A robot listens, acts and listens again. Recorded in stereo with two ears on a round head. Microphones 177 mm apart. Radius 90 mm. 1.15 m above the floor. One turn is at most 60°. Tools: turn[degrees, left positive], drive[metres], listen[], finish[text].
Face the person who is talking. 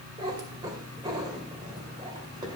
Action: listen[]
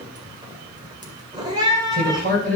Thought: The man speaking: about 45° right or 135° right.
Action: turn[-45]
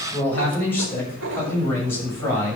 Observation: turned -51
Thought: So it is at 15° left.
Action: turn[15]
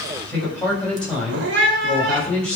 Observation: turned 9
Action: finish[Found it: a man speaking, straight ahead, over 4 m away.]